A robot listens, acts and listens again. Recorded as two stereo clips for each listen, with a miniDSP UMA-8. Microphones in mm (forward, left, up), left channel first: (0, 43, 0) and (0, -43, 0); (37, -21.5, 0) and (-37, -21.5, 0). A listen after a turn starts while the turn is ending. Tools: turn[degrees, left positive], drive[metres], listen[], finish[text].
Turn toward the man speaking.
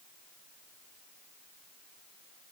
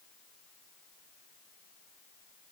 Action: listen[]
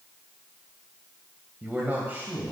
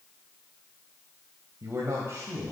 Thought: The man speaking: 145° right.
Action: turn[-145]
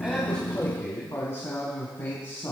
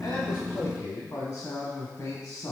Thought: The man speaking is now 45° left.
Action: turn[45]
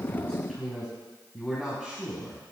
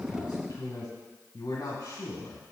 Action: finish[Found it: a man speaking, straight ahead.]